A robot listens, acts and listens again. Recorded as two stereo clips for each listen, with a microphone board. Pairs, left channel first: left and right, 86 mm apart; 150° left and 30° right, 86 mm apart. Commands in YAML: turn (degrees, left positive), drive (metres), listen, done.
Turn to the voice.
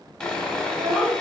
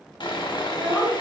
turn: -100
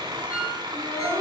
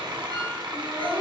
turn: 35
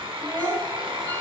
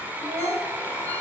done: "Facing the child speaking, 1 to 2 m away."